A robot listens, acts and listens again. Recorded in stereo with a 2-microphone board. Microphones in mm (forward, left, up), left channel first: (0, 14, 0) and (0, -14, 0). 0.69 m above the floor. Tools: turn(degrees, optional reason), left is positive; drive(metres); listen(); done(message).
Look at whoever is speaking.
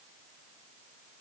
listen()
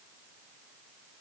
listen()
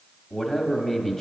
turn(degrees=15, reason="The man speaking: about 15° left or 165° left.")
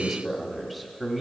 done("Facing the man speaking, 1 to 2 m away.")